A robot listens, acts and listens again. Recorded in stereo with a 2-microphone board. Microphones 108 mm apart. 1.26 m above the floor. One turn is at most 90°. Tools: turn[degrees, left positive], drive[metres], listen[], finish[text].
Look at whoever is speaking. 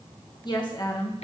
Thought: The woman speaking: about 40° left or 140° left.
Action: turn[40]
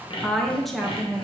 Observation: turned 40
Action: finish[Found it: a woman speaking, straight ahead.]